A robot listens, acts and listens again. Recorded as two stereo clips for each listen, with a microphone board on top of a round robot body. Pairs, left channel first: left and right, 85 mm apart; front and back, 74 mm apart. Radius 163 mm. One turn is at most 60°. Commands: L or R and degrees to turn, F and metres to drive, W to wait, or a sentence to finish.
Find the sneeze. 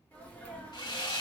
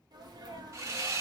L60
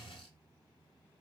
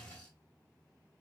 L60
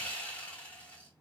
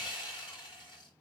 L40
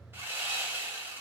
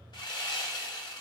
I heard a sneeze from this way, but can't make it out now.